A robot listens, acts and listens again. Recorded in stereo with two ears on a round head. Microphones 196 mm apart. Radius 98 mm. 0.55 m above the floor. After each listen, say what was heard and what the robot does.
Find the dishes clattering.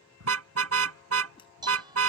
The dishes clattering: about 20° right or 160° right. Turn 20° right.
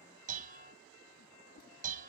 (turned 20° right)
So it is at 140° right. Turn 140° right.
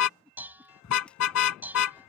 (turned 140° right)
The dishes clattering is now 10° right. Turn 10° right.
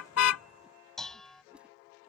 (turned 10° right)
Found it: dishes clattering, straight ahead.